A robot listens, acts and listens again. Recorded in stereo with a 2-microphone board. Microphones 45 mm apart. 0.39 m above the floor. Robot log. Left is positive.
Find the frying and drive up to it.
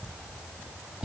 cmd idle
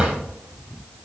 cmd idle
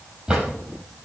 end: I can't make out frying to turn to.